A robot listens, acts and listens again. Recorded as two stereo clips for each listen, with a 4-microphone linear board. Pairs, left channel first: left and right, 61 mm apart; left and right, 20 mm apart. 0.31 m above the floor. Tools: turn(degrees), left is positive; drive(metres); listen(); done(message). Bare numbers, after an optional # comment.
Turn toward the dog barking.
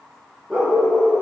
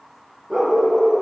turn(-30)
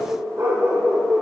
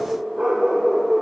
# So it is at 140° right.
turn(-140)
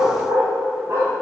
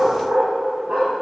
# The dog barking is now 40° right.
turn(-40)
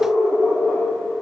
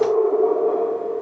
done("Facing the dog barking.")